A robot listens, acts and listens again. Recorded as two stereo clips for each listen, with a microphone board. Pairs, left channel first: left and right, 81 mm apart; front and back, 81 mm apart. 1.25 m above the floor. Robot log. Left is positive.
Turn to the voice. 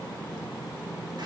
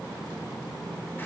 cmd idle
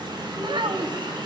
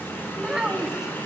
note: The child speaking: 95° right.
cmd yaw -95
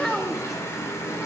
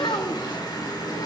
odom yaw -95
end: Found it: a child speaking, straight ahead.